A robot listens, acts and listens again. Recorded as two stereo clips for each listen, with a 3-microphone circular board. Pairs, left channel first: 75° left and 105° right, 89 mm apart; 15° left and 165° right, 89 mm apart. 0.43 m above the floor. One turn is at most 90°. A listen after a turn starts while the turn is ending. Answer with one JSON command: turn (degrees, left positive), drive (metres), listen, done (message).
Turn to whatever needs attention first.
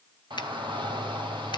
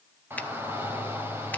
{"turn": -90}
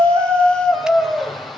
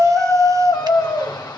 {"turn": -15}
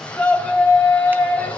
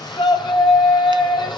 {"done": "Facing the shout."}